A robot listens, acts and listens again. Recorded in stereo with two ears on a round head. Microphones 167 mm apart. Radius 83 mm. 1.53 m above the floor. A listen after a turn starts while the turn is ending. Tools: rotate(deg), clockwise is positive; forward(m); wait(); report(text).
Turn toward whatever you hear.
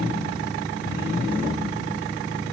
wait()
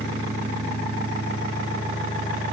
wait()
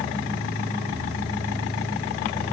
report("I can't make out anything to turn to.")